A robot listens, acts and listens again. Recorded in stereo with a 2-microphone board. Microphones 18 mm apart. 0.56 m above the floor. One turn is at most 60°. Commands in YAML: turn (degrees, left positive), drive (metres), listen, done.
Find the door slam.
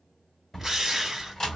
turn: 20
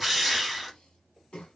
listen: true
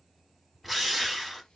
done: "I heard a door slam, but can't make it out now. It was about straight ahead or 140° left."